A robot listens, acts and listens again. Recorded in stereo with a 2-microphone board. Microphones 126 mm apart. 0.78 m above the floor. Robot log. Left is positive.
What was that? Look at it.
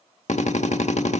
note: The drill: about 65° left or 115° left.
cmd yaw +65
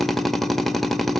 end: Found it: a drill, straight ahead, 1 to 2 m away.